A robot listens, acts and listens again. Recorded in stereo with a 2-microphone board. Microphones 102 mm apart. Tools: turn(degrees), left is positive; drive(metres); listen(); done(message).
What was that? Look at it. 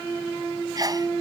turn(degrees=-40)
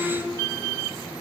listen()
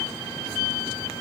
done("I heard a sneeze, but can't make it out now. It was about straight ahead or 100° right.")